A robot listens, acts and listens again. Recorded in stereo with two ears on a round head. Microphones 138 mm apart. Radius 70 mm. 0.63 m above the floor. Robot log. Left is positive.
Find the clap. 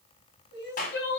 note: The clap: about 55° left or 125° left.
cmd yaw +55
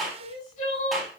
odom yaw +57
end: Facing the clap, over 4 m away.